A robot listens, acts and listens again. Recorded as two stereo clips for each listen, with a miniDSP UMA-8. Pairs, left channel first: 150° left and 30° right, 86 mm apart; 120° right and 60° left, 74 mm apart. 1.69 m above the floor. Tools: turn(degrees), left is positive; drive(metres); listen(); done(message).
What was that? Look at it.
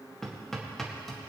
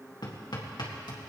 turn(degrees=-125)
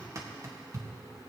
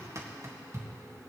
turn(degrees=15)
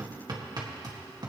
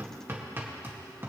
done("Facing the hammering.")